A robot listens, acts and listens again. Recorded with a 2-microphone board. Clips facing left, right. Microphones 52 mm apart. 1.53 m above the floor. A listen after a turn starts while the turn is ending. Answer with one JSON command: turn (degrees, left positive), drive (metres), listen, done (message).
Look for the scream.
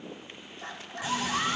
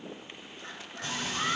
{"turn": 90}
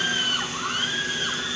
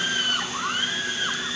{"done": "Facing the scream, over 4 m away."}